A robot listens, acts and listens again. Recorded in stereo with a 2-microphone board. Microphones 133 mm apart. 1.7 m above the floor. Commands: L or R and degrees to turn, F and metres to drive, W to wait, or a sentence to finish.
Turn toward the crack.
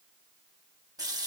W
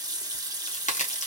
L70
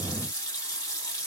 W
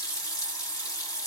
I heard a crack, but can't make it out now. It was about straight ahead or 40° left.